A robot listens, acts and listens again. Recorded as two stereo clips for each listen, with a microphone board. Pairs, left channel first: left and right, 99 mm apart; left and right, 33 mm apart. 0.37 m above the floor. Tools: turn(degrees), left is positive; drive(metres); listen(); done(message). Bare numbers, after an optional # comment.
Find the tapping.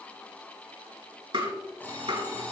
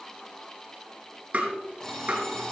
# The tapping: about 55° right or 125° right.
turn(-55)
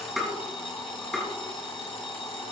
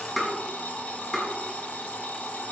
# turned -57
done("Facing the tapping, over 4 m away.")